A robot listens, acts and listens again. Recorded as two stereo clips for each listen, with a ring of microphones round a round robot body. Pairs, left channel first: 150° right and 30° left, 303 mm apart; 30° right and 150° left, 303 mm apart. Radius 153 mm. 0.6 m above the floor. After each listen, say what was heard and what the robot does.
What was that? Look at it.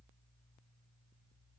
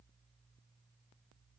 Keep listening.
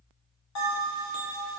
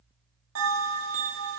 The bell: 170° right. Turn 170° right.
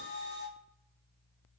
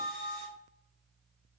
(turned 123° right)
The bell is now 45° right. Turn 45° right.
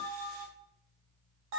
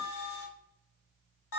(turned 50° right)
Found it: a bell, straight ahead, 1 to 2 m away.